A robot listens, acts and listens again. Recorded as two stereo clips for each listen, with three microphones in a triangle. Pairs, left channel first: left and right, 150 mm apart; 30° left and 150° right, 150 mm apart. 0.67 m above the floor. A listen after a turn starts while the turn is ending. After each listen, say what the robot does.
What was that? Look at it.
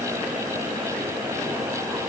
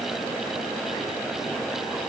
Keep listening.
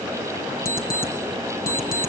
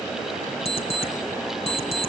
Turn 80° left.
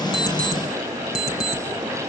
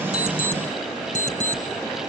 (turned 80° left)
Facing the alarm clock.